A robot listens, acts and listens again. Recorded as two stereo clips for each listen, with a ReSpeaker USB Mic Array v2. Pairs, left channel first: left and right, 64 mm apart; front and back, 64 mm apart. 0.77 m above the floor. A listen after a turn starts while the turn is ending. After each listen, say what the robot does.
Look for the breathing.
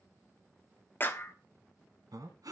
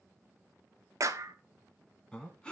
Turn 75° right.
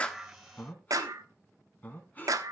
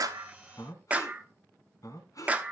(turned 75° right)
Turn 30° left.
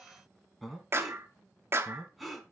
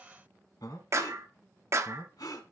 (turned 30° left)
Facing the breathing, 2 to 4 m away.